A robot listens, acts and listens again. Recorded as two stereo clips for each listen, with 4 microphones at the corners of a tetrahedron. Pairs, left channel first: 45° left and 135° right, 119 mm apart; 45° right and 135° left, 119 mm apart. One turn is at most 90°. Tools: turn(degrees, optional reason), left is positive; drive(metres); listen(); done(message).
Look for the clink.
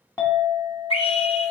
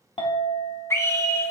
turn(degrees=-15, reason="The clink: 15° right.")
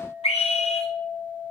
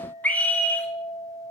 done("Facing the clink, 1 to 2 m away.")